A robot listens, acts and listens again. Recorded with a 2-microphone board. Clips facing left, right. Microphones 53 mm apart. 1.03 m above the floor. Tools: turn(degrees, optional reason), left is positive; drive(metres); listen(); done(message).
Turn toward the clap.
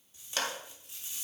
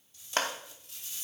turn(degrees=-40, reason="The clap: about 40° right or 140° right.")
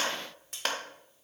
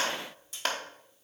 done("Found it: a clap, straight ahead.")